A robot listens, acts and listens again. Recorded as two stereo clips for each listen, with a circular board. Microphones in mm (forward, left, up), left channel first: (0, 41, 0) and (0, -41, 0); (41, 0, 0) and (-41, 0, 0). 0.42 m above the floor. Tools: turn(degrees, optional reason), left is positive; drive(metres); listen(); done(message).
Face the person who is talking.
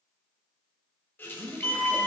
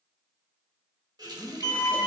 turn(degrees=-140, reason="The woman speaking: 140° right.")
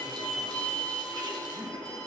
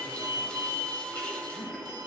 listen()
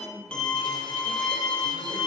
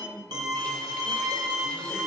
done("Facing the woman speaking, 2 to 4 m away.")